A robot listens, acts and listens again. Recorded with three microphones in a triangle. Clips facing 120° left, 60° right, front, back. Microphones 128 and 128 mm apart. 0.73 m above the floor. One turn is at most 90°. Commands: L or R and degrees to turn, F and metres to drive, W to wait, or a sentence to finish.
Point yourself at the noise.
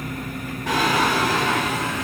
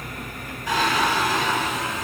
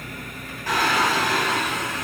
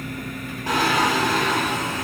L90
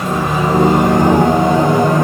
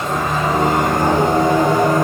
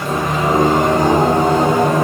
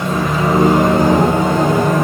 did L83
L55
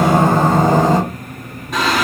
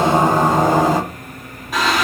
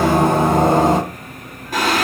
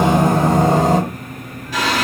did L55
L30
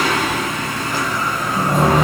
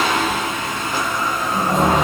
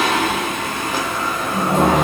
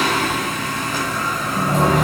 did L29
Found it: singing, straight ahead.